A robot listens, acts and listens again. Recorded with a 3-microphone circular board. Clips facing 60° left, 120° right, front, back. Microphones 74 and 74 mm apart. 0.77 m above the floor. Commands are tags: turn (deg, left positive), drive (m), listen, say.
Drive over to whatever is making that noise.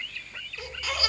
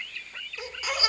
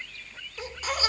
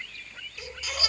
<turn deg="-50"/>
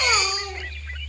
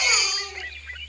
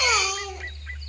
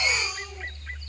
<drive m="1.0"/>
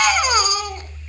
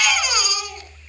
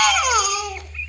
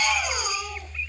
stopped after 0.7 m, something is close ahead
<say>Something is in my way. I am facing the baby crying but have not reached it.</say>